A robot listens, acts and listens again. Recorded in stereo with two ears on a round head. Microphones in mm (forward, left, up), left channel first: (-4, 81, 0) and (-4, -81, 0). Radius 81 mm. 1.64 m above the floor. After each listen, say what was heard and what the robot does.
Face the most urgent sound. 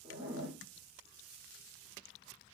Keep listening.
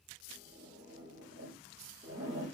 Keep listening.
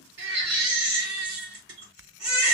The baby crying: about 75° right or 105° right. Turn 75° right.
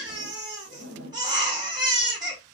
So it is at 25° right. Turn 25° right.
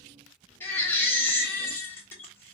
The baby crying is now 15° left. Turn 15° left.
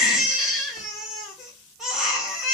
Found it: a baby crying, straight ahead.